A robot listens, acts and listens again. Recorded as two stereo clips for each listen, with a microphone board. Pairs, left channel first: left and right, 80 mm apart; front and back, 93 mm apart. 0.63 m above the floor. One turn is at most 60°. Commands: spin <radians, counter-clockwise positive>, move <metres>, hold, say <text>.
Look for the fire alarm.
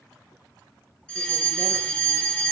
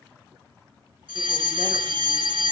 spin 1.05
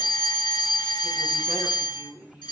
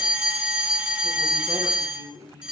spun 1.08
spin 1.05
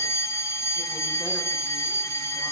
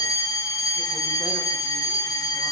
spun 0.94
spin 0.87
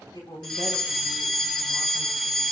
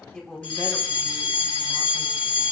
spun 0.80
say Facing the fire alarm, over 4 m away.